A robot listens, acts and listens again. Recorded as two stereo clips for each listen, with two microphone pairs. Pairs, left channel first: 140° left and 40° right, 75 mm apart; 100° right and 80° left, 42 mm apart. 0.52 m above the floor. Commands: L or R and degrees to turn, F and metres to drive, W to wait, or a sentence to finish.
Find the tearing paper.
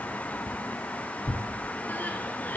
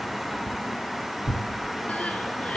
L170
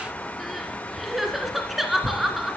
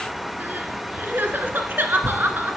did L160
L10
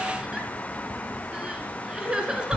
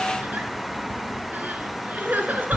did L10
Found it: tearing paper, straight ahead.